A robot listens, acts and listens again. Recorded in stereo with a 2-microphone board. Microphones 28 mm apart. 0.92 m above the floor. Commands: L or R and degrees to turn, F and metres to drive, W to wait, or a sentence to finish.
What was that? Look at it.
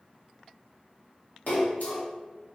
L65
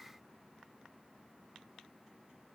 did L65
W
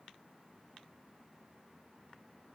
I heard a splash, but can't make it out now. It was about straight ahead or 50° left.